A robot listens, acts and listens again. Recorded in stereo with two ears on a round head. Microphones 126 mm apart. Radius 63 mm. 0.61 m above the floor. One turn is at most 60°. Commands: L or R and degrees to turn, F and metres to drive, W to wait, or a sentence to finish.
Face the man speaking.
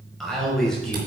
L30
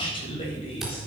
L60
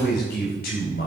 L60
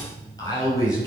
L25
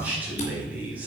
R10
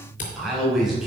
Found it: a man speaking, straight ahead, over 4 m away.